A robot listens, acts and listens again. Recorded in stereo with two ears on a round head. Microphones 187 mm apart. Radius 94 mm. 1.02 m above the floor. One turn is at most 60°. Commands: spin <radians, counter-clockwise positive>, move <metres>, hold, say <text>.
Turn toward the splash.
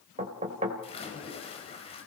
spin 0.52
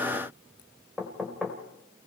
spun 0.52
hold
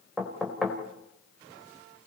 say I heard a splash, but can't make it out now. It was about straight ahead or 120° left.